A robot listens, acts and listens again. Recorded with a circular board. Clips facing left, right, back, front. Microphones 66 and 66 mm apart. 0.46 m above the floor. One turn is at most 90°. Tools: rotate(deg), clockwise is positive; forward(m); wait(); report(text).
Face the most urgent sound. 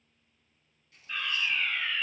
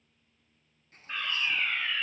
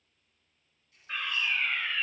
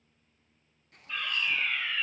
rotate(90)
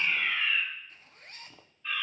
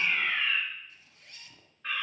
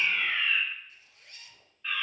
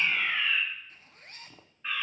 rotate(70)
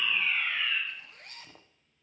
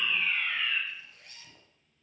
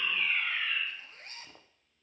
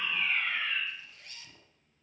rotate(-15)
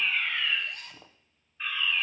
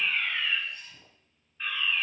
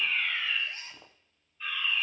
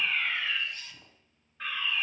report("Found it: a fire alarm, straight ahead, over 4 m away.")